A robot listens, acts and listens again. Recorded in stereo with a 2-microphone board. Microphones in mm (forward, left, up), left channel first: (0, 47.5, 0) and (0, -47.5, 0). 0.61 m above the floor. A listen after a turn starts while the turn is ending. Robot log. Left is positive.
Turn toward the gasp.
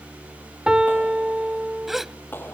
cmd yaw -30
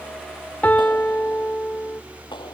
cmd idle
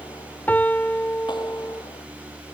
end: I heard a gasp, but can't make it out now. It was about 25° left or 145° right.